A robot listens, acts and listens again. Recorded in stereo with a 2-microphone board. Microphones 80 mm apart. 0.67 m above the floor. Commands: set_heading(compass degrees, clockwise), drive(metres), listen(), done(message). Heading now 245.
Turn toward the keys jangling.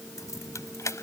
set_heading(205)
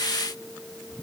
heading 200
listen()
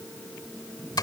set_heading(75)
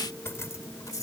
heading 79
set_heading(34)
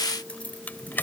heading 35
set_heading(10)
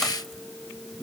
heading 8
listen()
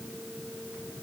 listen()
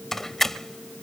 done("Found it: keys jangling, straight ahead.")